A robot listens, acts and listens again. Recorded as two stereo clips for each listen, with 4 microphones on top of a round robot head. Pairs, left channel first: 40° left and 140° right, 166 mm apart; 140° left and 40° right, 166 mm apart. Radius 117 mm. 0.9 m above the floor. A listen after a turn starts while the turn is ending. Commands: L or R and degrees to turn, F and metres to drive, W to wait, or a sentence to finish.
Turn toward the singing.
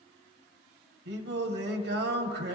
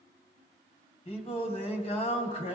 R160
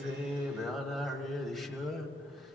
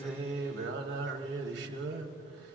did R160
R50
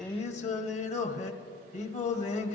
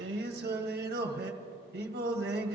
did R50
R10
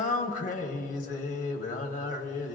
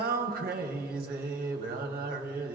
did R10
Found it: singing, straight ahead, 1 to 2 m away.